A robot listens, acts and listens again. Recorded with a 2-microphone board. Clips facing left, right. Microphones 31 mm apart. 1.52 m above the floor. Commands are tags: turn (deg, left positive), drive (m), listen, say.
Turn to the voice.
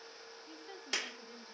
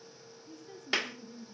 <turn deg="40"/>
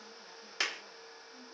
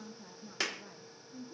<turn deg="-15"/>
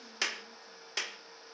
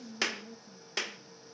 <turn deg="-10"/>
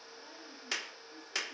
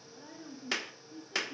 <turn deg="-10"/>
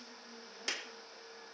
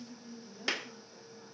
<say>Facing the woman speaking.</say>